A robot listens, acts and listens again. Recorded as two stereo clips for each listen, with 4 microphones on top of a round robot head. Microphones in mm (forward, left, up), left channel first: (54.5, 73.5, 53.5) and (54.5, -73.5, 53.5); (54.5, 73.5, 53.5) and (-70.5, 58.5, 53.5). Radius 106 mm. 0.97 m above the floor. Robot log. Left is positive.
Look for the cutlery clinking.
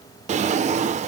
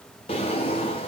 cmd idle
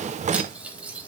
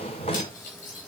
note: The cutlery clinking: 10° right.
cmd yaw -10
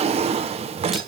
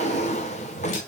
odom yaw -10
cmd idle
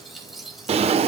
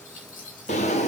end: Facing the cutlery clinking, 2 to 4 m away.